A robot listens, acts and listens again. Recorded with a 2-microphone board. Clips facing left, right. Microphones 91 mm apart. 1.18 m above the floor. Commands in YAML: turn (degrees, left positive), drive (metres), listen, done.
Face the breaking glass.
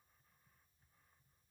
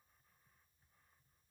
listen: true
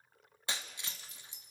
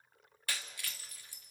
turn: 20
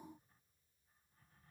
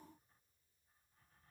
listen: true
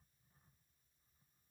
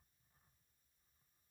done: "I heard breaking glass, but can't make it out now. It was about straight ahead or 140° left."